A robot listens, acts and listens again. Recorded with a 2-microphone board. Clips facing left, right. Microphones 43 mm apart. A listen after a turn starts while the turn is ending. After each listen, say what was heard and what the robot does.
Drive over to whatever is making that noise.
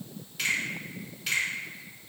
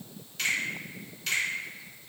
Turn 30° left.
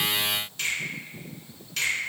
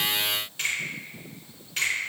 So it is at 25° right. Turn 25° right.
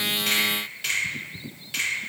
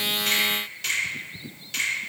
The finger snap is now 10° left. Turn 10° left.
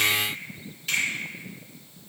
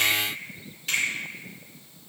Drive 1.0 m forward.
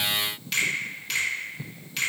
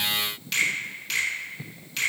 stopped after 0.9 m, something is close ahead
Arrived at the finger snap, straight ahead.